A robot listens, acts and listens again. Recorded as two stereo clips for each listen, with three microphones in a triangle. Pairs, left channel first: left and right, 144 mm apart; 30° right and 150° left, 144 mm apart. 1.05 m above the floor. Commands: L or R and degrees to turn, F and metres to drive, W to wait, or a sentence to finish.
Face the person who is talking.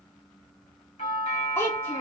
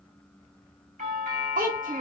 L165
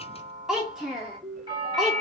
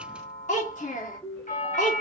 Facing the child speaking, 1 to 2 m away.